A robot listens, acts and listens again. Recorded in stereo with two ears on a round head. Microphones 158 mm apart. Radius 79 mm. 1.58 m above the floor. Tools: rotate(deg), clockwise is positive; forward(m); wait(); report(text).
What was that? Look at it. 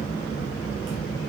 wait()
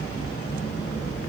wait()
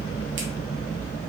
report("I can't make out anything.")